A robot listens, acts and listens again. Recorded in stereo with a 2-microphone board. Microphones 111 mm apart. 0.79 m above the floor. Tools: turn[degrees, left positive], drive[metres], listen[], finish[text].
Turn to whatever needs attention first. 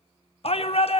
Thought: The shout: about 60° left or 120° left.
Action: turn[60]
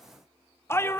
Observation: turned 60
Thought: So it is at 25° left.
Action: turn[25]
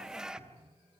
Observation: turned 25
Action: listen[]
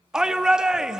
Action: finish[Facing the shout.]